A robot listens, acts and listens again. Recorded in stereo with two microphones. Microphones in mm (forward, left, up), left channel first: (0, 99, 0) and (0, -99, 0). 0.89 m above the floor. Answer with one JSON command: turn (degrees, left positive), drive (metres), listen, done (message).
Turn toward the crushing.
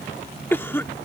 {"listen": true}
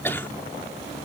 {"listen": true}
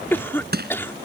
{"turn": -55}
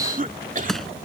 {"done": "Found it: crushing, straight ahead."}